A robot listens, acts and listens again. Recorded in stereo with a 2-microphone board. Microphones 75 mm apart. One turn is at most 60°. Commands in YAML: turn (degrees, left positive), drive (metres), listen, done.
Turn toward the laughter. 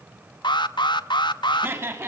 turn: -35
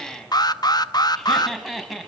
done: "Facing the laughter."